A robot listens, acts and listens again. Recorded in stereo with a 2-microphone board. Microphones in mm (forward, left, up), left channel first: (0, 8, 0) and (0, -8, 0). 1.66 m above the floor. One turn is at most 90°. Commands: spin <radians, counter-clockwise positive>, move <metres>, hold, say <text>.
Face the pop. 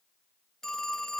hold
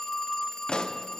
spin 1.05
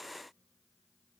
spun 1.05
hold
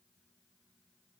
say I heard a pop, but can't make it out now. It was about straight ahead or 60° left.